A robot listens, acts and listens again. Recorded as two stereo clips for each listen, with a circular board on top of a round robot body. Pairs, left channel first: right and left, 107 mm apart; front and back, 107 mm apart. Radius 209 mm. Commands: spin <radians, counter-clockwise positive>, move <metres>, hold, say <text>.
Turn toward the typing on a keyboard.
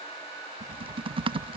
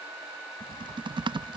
spin 2.27
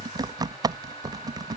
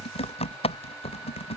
spin 0.61
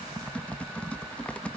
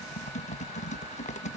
spin -0.17
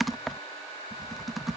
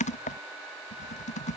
say Found it: typing on a keyboard, straight ahead.